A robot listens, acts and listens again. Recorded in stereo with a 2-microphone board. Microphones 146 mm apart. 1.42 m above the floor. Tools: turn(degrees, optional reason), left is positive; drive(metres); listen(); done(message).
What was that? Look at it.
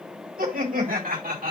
turn(degrees=-90)
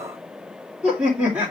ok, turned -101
turn(degrees=-15, reason="So it is at 15° right.")
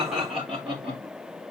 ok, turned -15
turn(degrees=-10, reason="The laughter is now 10° right.")
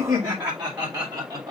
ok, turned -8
turn(degrees=-20, reason="The laughter is now 20° right.")
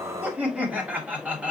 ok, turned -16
done("Facing the laughter, 2 to 4 m away.")